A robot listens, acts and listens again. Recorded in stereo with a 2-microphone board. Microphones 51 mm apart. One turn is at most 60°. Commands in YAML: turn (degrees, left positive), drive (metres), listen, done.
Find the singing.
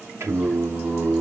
turn: -60
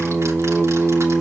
turn: -25
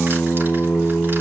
turn: 20
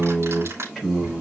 done: "Facing the singing, over 4 m away."